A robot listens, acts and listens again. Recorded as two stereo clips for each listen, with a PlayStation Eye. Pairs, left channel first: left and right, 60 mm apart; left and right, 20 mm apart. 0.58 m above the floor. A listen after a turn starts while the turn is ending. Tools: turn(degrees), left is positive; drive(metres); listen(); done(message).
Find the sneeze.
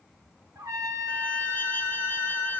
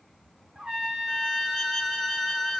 listen()
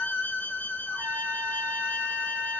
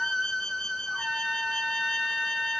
listen()
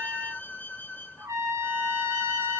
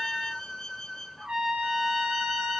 done("I can't make out a sneeze to turn to.")